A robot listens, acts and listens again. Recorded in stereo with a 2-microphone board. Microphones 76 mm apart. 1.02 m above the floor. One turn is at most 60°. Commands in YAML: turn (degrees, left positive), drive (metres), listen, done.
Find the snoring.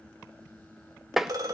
listen: true
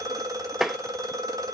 listen: true
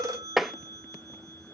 done: "I can't make out snoring to turn to."